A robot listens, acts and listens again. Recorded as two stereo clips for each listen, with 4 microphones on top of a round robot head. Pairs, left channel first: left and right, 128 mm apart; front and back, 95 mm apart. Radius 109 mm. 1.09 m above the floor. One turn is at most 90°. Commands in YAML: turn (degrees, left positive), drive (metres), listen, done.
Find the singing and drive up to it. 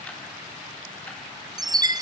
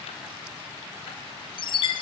listen: true
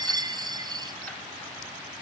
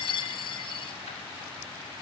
listen: true
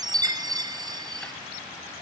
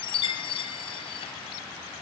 done: "I can't make out singing to turn to."